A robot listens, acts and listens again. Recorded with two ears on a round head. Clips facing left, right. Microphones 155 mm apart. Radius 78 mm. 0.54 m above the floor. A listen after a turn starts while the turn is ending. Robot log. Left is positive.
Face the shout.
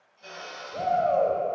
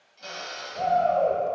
note: The shout: about 60° left or 120° left.
cmd yaw +60
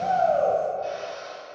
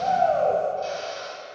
cmd idle
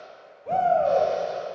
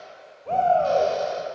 note: So it is at 10° left.
cmd yaw +10
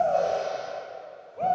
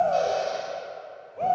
end: Found it: a shout, straight ahead, 1 to 2 m away.